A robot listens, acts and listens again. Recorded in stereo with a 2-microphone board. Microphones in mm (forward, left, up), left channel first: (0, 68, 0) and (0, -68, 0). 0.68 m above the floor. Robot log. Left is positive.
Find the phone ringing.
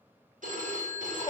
note: The phone ringing: about 70° right or 110° right.
cmd yaw -70
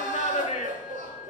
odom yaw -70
cmd idle
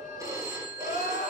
note: So it is at 25° right.
cmd yaw -25
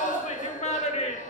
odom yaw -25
cmd idle
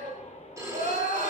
note: The phone ringing is now 25° right.
cmd yaw -25
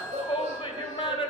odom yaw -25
cmd idle
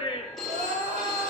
end: Facing the phone ringing, 1 to 2 m away.